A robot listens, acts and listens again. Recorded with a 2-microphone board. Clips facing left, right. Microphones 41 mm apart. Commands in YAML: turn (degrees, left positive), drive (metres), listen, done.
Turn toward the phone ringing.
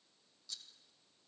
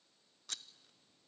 listen: true
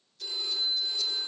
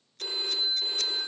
turn: -45
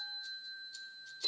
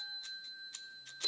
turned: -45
done: "Facing the phone ringing."